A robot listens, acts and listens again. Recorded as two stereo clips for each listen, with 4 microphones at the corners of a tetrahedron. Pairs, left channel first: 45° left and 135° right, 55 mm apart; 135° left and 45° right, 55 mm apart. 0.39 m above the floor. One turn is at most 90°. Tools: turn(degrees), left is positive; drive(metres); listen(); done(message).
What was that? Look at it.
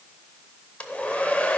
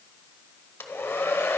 turn(degrees=90)
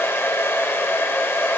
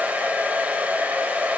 turn(degrees=10)
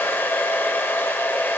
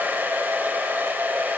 done("Facing the hair dryer.")